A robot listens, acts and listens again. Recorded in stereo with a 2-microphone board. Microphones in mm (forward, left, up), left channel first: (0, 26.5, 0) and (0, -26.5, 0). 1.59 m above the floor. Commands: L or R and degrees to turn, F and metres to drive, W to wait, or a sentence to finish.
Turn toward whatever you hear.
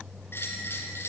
L55
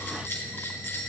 L60
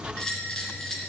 L15
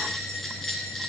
Found it: a bell, straight ahead.